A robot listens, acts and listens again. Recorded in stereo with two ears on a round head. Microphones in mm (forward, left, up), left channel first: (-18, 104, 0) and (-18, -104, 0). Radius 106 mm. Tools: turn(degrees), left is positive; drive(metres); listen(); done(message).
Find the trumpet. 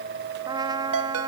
turn(degrees=-15)
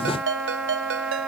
done("Facing the trumpet.")